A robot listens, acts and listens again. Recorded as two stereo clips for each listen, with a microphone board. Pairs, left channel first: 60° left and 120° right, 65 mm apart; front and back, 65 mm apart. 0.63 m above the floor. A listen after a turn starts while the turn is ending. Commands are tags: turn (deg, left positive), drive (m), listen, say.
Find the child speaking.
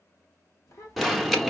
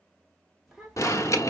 <turn deg="90"/>
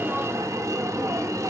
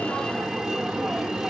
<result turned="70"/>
<turn deg="20"/>
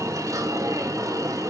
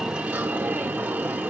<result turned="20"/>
<listen/>
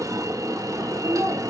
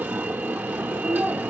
<say>Facing where the child speaking came from. I can't hear it now.</say>